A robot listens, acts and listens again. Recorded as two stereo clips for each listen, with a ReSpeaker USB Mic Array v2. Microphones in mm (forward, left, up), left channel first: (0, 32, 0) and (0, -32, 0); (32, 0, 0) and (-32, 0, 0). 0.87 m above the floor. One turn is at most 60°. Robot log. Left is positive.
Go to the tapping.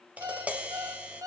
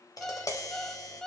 note: The tapping: 25° right.
cmd yaw -25
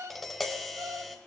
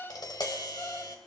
cmd fwd 1.0
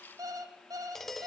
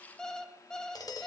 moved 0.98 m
cmd fwd 1.0
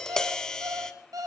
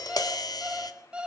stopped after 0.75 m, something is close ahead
note: The tapping is now 10° left.
cmd yaw +10
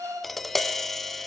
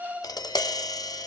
end: Arrived at the tapping, straight ahead.